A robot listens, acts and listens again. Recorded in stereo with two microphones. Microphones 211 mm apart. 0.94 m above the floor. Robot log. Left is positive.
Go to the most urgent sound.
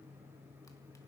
cmd idle
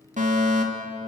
note: The fire alarm: about 35° right or 145° right.
cmd yaw -35
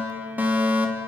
note: So it is at 10° right.
cmd yaw -10
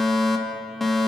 cmd fwd 1.0
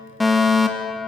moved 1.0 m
cmd fwd 1.0
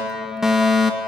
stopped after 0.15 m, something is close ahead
end: Arrived at the fire alarm, straight ahead.